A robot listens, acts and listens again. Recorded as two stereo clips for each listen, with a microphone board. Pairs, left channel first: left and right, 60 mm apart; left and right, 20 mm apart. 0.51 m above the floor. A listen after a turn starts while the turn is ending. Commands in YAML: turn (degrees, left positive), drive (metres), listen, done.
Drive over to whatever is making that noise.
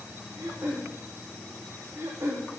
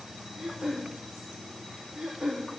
turn: -55
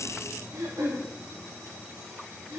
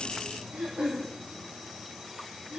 turn: -75
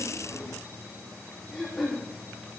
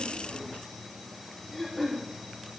drive: 1.0
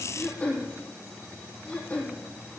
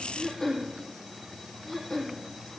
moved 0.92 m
turn: 20
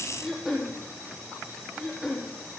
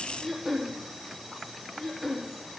drive: 1.0
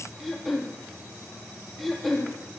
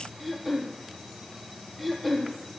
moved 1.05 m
drive: 1.0
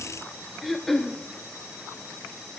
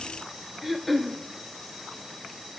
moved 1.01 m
drive: 1.0
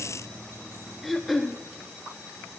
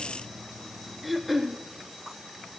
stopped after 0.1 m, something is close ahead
done: "Arrived at the throat clearing, straight ahead."